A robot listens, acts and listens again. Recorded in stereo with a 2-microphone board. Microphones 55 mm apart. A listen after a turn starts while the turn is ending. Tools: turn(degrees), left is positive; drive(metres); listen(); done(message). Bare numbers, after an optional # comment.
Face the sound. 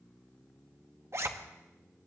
# The zipper: about 60° right or 120° right.
turn(-60)
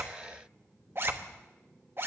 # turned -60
# So it is at 50° right.
turn(-50)
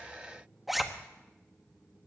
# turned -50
done("Found it: a zipper, straight ahead, 1 to 2 m away.")